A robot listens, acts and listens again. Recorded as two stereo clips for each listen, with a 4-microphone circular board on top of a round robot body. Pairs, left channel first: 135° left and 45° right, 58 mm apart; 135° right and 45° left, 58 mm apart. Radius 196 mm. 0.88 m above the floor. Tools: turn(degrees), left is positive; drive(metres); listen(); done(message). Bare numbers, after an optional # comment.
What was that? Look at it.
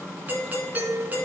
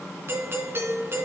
# The doorbell: 10° left.
turn(10)
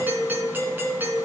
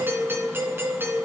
done("Found it: a doorbell, straight ahead.")